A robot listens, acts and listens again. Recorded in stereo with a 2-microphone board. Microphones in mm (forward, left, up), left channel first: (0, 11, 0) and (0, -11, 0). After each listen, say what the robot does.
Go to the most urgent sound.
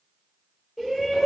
Turn 30° right.
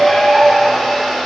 Turn 25° left.
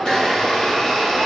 Keep listening.
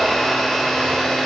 Keep listening.
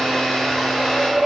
Drive 1.0 m forward.
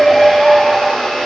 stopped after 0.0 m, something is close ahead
Blocked. The shout is further on, straight ahead.